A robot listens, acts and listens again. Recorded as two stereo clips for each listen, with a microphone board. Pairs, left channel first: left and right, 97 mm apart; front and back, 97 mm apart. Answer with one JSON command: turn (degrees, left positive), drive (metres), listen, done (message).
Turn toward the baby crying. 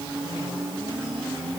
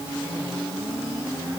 {"listen": true}
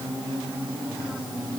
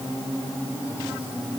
{"listen": true}
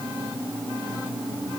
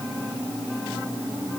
{"done": "I can't make out a baby crying to turn to."}